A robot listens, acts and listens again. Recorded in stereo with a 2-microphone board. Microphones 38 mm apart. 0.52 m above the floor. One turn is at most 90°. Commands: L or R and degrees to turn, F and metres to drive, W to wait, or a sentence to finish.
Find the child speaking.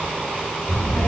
L70
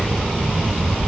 L25
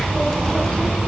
L15
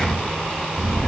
L10
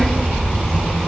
Found it: a child speaking, straight ahead, 2 to 4 m away.